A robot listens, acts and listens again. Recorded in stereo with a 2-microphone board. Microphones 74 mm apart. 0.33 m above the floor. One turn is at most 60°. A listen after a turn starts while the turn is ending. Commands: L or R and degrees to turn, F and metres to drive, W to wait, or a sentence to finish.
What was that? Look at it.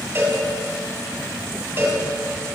R35
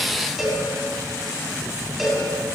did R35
Found it: a cowbell, straight ahead, 2 to 4 m away.